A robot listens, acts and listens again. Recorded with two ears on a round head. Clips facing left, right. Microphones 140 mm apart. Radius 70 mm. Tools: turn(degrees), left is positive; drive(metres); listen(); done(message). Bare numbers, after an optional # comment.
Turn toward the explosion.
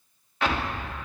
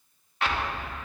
# The explosion: about 70° left or 110° left.
turn(70)
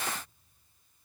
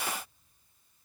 listen()
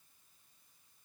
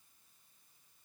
done("I heard an explosion, but can't make it out now. It was about straight ahead or 40° left.")